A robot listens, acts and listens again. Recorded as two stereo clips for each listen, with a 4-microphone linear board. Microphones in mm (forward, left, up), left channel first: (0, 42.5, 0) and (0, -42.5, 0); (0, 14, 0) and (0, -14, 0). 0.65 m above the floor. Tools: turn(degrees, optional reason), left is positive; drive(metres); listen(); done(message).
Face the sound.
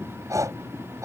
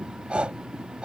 turn(degrees=-40, reason="The breathing: about 40° right or 140° right.")
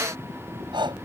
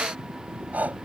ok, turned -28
turn(degrees=-110, reason="So it is at 110° right.")
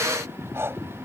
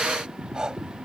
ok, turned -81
turn(degrees=-30, reason="The breathing is now 30° right.")
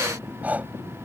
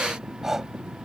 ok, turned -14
turn(degrees=-20, reason="The breathing is now 20° right.")
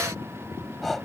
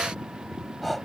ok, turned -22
done("Found it: breathing, straight ahead.")